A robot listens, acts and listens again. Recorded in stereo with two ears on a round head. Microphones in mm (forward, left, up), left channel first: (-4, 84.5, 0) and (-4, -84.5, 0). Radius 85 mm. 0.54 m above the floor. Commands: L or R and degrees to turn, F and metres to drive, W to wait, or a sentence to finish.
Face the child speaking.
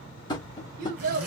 R45
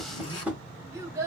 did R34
R15
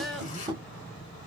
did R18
Found it: a child speaking, straight ahead.